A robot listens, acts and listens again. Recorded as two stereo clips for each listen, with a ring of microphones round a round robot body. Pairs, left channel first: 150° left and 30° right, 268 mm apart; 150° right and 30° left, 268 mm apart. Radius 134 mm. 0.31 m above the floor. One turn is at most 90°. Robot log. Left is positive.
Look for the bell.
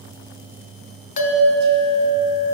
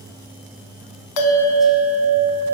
note: The bell: 150° right.
cmd yaw -90
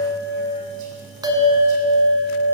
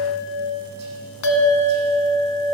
note: The bell is now 105° right.
cmd yaw -90
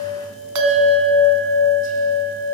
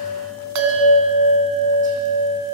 end: Facing the bell, 1 to 2 m away.